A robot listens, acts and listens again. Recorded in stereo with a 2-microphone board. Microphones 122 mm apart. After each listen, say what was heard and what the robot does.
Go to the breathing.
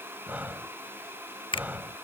Turn 30° right.
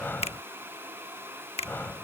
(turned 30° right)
So it is at 15° left. Turn 15° left.
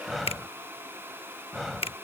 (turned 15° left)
Drive 1.0 m forward.
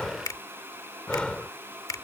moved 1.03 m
The breathing is now 10° left. Turn 10° left.
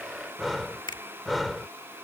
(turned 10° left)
Drive 1.0 m forward.
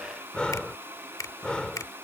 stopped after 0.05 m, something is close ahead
The breathing is now 10° left. Turn 10° left.
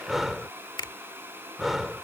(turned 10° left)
I am next to the breathing.